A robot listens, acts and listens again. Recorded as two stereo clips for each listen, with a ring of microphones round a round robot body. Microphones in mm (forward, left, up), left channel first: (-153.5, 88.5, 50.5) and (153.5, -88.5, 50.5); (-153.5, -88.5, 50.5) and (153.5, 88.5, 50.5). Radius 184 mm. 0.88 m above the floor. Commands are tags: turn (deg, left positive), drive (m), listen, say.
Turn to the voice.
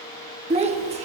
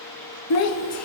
<turn deg="-105"/>
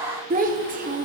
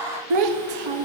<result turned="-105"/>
<turn deg="40"/>
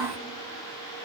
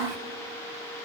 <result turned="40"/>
<listen/>
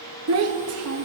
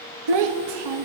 <turn deg="20"/>
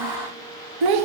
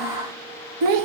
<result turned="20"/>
<say>Facing the child speaking.</say>